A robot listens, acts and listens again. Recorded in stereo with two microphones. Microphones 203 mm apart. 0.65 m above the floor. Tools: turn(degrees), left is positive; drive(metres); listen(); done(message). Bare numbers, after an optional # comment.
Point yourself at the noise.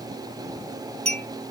# The clink: about 35° right or 145° right.
turn(-35)
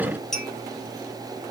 done("Facing the clink, 1 to 2 m away.")